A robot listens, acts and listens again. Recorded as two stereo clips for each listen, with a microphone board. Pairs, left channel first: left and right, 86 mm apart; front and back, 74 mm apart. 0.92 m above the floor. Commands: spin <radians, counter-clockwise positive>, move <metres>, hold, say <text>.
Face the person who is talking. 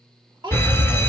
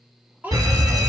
spin -1.92
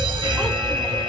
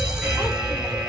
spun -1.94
hold
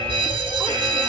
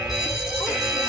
hold
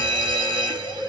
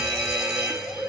say Facing where the child speaking came from. I can't hear it now.